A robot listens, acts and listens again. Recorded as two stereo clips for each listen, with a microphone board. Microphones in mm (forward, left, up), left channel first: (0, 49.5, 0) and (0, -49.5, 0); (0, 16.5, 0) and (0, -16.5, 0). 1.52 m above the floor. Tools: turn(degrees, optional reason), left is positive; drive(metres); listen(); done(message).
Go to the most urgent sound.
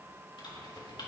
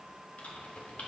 listen()
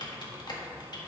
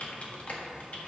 listen()
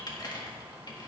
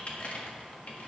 done("I can't make out anything urgent to turn to.")